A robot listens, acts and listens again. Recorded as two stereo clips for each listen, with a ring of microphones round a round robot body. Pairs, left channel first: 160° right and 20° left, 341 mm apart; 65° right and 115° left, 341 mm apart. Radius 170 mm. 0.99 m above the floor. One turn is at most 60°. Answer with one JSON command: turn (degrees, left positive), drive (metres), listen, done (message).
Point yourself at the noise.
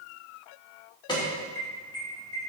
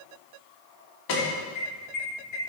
{"turn": -60}
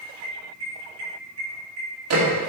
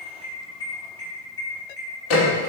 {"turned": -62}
{"turn": -20}
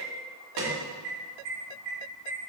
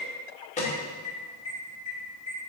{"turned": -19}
{"done": "Found it: an alarm, straight ahead, 2 to 4 m away."}